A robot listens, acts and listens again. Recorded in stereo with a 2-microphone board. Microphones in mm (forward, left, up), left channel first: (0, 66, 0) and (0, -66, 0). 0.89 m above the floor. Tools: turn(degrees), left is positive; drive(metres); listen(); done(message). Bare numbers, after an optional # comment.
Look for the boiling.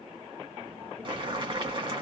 # The boiling: about 35° right or 145° right.
turn(-35)
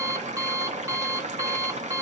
# So it is at 110° right.
turn(-110)
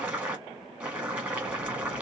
# The boiling is now 10° right.
turn(-10)
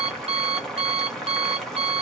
done("Found it: boiling, straight ahead, 1 to 2 m away.")